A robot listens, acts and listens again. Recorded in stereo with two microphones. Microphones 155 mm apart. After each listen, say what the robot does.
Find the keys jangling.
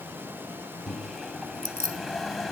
Turn 90° right.
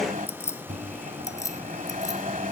Turn 20° left.
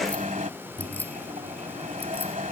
Keep listening.
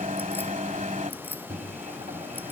Keep listening.
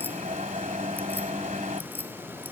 Facing where the keys jangling came from. I can't hear it now.